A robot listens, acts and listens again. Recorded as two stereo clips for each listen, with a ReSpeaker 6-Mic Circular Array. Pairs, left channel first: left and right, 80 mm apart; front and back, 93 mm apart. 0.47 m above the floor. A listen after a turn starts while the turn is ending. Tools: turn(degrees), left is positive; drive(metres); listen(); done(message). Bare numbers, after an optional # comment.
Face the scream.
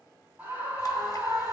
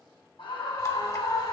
# The scream: 25° right.
turn(-25)
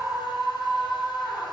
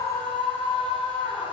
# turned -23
done("Facing the scream, 2 to 4 m away.")